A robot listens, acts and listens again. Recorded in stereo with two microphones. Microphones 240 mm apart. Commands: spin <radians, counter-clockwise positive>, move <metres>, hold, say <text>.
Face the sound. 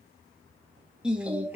spin -0.52
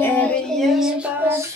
spin -0.52
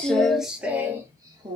spin -0.35
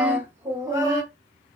spin -0.26
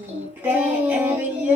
spin -0.52
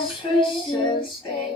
spin 0.35
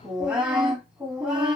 say Found it: singing, straight ahead.